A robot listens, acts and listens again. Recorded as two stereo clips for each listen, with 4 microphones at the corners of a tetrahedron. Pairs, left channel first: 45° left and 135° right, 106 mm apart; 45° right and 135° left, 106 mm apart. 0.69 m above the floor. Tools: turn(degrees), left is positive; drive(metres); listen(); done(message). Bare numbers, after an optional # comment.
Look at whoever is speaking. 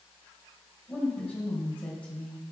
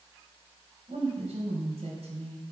# The woman speaking: 125° left.
turn(125)
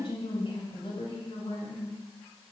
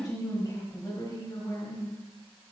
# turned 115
# The woman speaking is now 10° left.
turn(10)
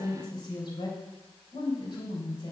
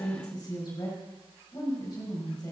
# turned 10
done("Facing the woman speaking.")